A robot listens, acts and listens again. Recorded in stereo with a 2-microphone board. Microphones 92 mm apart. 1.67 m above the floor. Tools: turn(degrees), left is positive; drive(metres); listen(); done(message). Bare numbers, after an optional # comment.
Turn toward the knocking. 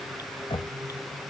turn(90)
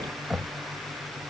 done("Found it: knocking, straight ahead.")